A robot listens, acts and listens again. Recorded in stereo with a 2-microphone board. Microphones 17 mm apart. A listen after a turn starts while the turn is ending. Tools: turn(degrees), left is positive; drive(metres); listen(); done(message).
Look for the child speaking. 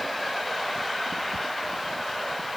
listen()
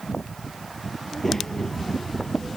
turn(degrees=25)
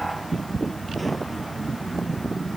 done("Facing the child speaking.")